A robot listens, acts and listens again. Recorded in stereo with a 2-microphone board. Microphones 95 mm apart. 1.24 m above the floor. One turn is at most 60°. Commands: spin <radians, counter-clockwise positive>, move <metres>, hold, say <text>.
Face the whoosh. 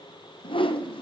spin 1.05
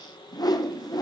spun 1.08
spin 0.79
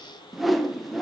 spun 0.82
say Found it: a whoosh, straight ahead.